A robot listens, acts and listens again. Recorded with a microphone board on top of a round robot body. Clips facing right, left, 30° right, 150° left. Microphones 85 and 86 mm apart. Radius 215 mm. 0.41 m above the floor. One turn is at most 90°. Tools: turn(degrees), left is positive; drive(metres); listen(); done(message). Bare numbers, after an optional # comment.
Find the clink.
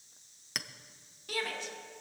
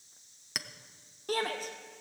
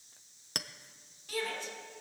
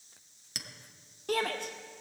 done("Found it: a clink, straight ahead, under 1 m away.")